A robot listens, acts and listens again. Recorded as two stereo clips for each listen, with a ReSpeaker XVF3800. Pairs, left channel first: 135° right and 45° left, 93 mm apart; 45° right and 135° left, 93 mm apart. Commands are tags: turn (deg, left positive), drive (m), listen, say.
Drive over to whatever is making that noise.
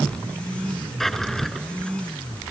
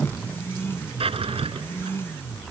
<turn deg="135"/>
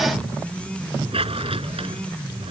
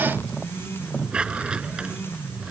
<turn deg="55"/>
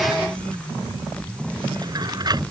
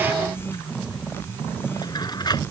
<drive m="1.0"/>
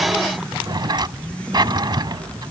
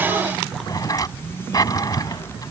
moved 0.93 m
<drive m="1.0"/>
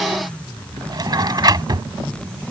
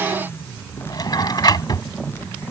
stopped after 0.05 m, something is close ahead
<say>Arrived at the drawer, straight ahead.</say>